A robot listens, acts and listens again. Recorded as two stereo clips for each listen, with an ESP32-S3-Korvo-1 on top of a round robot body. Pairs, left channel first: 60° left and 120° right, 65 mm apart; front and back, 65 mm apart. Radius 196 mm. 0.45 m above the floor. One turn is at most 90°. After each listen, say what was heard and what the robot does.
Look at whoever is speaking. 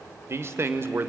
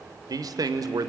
The man speaking: 170° right. Turn 90° right.
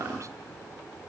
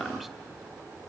Nothing new. It was at 80° right. Turn 80° right.
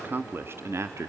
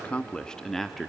The man speaking is now 90° right. Turn 90° right.
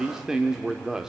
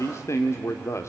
The man speaking is now 40° right. Turn 40° right.
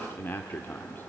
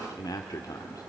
Facing the man speaking.